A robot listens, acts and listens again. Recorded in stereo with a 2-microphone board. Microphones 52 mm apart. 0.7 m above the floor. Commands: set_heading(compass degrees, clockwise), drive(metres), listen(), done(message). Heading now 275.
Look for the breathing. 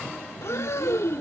set_heading(205)
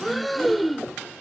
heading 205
done("Facing the breathing.")